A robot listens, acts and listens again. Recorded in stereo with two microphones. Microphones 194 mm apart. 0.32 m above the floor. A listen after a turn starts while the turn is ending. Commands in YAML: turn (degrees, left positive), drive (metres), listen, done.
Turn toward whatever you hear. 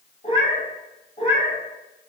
turn: 35
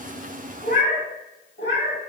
turn: 105
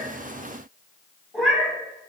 done: "Found it: a cat meowing, straight ahead."